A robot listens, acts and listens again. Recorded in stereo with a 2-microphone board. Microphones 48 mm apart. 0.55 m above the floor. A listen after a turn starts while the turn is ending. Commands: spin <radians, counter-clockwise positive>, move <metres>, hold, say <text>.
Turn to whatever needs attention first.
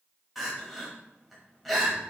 spin 0.52
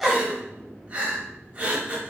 spin -0.52
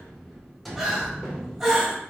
say Found it: crying, straight ahead.